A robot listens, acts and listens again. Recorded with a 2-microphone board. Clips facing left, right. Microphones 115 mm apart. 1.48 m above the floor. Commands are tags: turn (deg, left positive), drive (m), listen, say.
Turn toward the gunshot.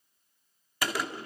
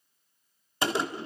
<turn deg="-25"/>
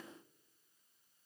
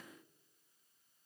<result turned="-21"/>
<listen/>
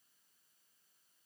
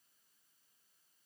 <say>I heard a gunshot, but can't make it out now. It was about 5° right or 135° right.</say>